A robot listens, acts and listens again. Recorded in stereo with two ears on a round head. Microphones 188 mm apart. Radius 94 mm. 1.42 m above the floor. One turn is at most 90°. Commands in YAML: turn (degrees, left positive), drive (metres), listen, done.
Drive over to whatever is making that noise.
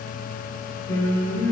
turn: 15
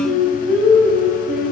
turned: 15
drive: 1.0
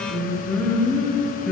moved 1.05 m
drive: 1.0
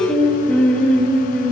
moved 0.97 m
turn: 10
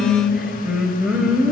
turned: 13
drive: 1.0
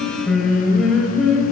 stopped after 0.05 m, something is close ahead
done: "Arrived at the singing, straight ahead."